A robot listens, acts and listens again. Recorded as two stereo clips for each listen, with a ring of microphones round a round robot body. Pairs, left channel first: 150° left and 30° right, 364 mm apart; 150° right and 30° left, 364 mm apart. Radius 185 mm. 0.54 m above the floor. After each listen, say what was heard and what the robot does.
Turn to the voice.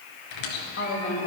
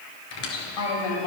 The woman speaking: 155° right. Turn 155° right.
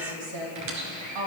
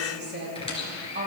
The woman speaking is now 30° right. Turn 30° right.
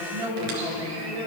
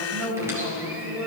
The woman speaking is now 10° right. Turn 10° right.
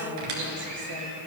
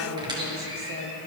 Facing the woman speaking, 2 to 4 m away.